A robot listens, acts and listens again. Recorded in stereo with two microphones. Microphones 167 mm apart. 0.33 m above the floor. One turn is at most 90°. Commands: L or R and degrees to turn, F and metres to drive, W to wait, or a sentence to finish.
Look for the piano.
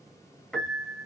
L30
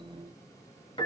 L90
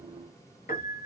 L60
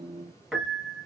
Facing the piano.